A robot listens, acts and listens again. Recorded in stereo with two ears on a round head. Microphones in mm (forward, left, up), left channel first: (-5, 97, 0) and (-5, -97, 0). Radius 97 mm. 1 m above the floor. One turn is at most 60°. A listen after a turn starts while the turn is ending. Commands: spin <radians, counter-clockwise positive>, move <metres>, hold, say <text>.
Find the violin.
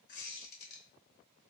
hold
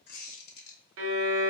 spin -1.05
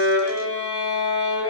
spin -0.35
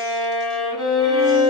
say Found it: a violin, straight ahead.